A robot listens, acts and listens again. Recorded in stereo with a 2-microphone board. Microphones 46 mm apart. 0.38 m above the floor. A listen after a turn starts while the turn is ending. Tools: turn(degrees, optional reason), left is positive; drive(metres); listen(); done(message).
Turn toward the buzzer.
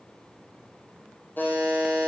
turn(degrees=45, reason="The buzzer: about 45° left or 135° left.")
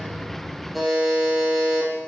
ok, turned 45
done("Facing the buzzer.")